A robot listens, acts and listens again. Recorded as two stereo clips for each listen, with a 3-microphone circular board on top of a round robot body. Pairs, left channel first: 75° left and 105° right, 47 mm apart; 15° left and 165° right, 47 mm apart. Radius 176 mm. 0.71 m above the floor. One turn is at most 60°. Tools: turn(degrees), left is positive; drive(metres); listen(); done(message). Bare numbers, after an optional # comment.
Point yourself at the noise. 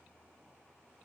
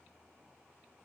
listen()
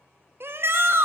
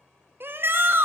# The shout: 130° right.
turn(-60)
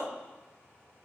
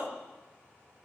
# Nothing new. It was at 70° right.
turn(-60)
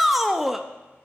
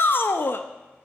# The shout is now 20° right.
turn(-20)
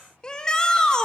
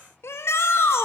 done("Found it: a shout, straight ahead, 1 to 2 m away.")